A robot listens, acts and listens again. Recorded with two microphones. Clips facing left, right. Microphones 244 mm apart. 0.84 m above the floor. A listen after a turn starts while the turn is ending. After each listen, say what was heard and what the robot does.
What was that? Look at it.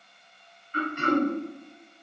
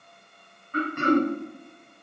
The throat clearing: about 60° right or 120° right. Turn 60° right.
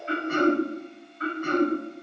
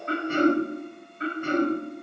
So it is at 30° right. Turn 30° right.
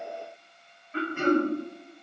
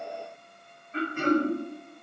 Facing the throat clearing, 1 to 2 m away.